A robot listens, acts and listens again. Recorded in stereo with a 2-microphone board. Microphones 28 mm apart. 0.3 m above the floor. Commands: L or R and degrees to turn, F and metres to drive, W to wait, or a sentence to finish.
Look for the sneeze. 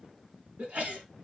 R65
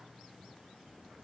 W
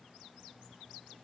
I heard a sneeze, but can't make it out now. It was about straight ahead or 50° right.